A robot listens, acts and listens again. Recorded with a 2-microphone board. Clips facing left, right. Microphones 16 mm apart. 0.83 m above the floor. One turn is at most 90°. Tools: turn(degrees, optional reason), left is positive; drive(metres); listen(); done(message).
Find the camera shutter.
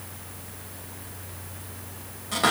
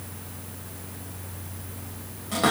listen()
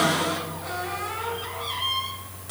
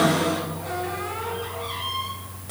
listen()
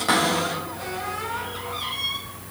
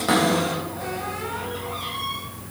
done("I can't make out a camera shutter, only a cupboard door.")